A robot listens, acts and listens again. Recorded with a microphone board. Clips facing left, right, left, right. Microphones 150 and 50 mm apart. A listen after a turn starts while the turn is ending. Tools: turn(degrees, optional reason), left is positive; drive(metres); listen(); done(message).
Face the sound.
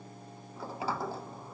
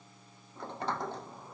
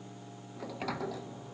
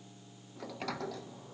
turn(degrees=30)
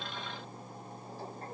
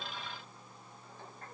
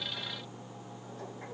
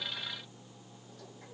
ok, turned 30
turn(degrees=145, reason="So it is at 145° left.")
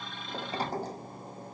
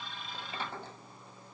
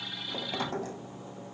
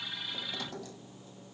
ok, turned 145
turn(degrees=40, reason="The sliding door is now 40° left.")
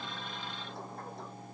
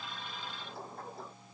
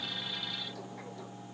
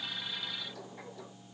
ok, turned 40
done("Found it: a sliding door, straight ahead.")